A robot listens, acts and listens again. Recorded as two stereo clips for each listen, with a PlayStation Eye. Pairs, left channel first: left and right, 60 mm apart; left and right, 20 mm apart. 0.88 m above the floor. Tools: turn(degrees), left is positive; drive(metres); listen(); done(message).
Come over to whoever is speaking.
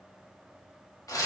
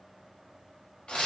listen()
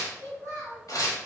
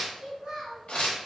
turn(degrees=-55)
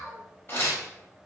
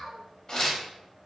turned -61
drive(metres=1.0)
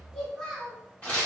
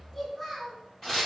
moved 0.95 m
turn(degrees=10)
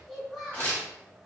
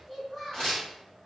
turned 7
drive(metres=1.0)
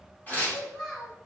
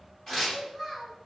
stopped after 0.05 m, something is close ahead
done("Arrived at the child speaking, straight ahead.")